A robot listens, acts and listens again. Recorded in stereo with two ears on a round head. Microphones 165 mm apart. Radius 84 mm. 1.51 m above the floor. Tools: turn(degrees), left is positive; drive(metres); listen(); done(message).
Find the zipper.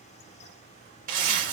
turn(degrees=-50)
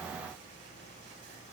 listen()
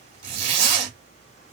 turn(degrees=-75)
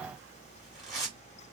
done("Found it: a zipper, straight ahead.")